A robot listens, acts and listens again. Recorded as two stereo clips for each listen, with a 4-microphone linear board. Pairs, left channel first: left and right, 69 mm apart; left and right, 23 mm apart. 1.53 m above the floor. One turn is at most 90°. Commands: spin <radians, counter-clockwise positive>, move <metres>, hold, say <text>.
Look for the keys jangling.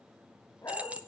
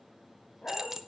spin -0.35
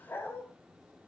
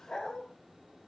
hold
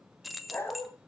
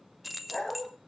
say Found it: keys jangling, straight ahead, 1 to 2 m away.